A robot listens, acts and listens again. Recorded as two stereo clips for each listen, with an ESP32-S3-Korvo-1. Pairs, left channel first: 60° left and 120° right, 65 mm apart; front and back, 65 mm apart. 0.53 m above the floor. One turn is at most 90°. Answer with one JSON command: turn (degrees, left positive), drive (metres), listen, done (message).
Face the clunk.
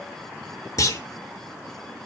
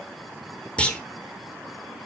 {"turn": 70}
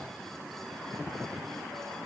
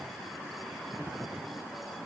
{"done": "I heard a clunk from this way, but can't make it out now."}